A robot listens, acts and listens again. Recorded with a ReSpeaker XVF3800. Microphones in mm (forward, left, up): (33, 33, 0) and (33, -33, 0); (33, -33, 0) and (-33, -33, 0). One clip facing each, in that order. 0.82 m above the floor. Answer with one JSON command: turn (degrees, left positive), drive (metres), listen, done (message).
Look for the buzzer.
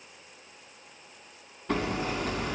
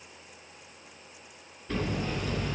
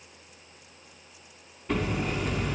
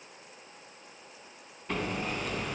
{"listen": true}
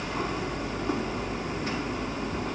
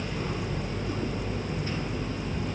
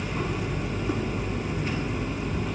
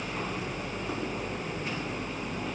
{"listen": true}
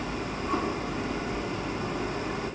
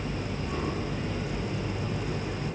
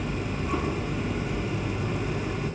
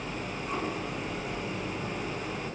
{"done": "I can't make out a buzzer to turn to."}